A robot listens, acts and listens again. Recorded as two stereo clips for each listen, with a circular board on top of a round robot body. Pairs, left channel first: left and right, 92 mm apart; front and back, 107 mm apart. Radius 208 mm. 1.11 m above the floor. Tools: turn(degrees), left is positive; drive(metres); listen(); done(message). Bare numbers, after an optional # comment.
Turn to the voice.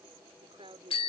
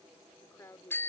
# The woman speaking: 65° right.
turn(-65)
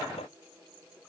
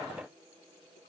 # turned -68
listen()
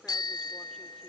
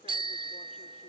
listen()
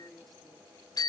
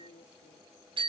done("Found it: a woman speaking, straight ahead.")